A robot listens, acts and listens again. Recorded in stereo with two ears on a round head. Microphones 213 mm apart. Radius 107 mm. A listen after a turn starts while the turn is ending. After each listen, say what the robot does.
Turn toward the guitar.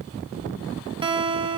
Turn 25° right.
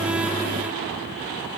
Keep listening.
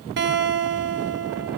Turn 130° right.
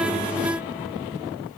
Keep listening.
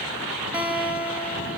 Facing the guitar, over 4 m away.